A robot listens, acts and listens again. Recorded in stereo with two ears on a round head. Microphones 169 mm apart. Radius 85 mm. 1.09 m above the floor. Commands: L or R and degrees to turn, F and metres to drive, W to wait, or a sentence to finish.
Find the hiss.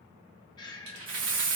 R45
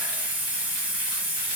R10
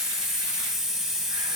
Found it: a hiss, straight ahead.